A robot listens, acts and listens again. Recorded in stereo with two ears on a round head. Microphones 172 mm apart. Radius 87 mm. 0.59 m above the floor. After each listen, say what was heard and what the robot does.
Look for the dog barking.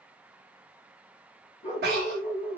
The dog barking: about 35° left or 145° left. Turn 35° left.
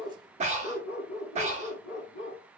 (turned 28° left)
So it is at 115° left. Turn 115° left.
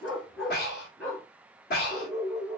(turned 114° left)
Found it: a dog barking, straight ahead.